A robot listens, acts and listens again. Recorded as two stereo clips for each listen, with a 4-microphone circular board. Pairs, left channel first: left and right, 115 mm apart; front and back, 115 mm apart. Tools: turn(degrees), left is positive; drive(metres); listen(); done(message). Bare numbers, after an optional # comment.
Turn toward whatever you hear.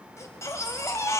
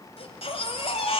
# The baby crying: 30° left.
turn(30)
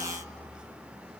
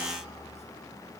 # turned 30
# The baby crying is now 10° right.
turn(-10)
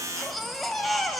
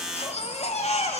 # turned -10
done("Found it: a baby crying, straight ahead, 2 to 4 m away.")